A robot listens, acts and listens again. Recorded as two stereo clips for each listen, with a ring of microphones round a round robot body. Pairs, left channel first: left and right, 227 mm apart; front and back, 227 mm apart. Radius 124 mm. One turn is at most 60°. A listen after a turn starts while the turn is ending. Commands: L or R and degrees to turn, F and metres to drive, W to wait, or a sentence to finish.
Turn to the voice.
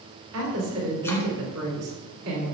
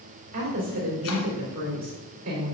R60
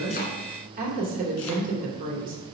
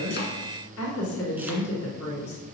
R35
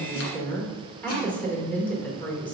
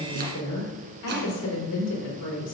Facing the woman speaking, 2 to 4 m away.